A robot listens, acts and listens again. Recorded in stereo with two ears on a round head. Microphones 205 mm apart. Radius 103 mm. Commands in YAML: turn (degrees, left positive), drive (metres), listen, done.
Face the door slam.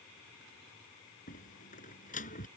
turn: 35
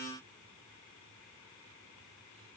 listen: true
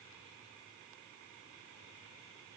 done: "I heard a door slam, but can't make it out now. It was about straight ahead or 110° left."